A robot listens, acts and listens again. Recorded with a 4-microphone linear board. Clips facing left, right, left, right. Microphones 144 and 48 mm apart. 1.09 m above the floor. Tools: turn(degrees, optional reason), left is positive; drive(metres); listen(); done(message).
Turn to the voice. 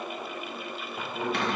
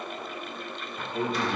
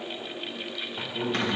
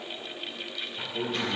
turn(degrees=-20, reason="The man speaking: about 20° right or 160° right.")
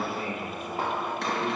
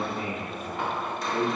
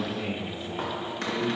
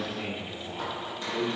turn(degrees=-140, reason="So it is at 140° right.")
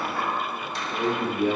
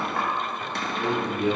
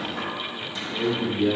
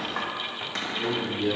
turn(degrees=15, reason="The man speaking is now 15° left.")
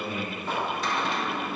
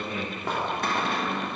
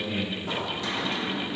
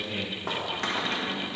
done("Found it: a man speaking, straight ahead.")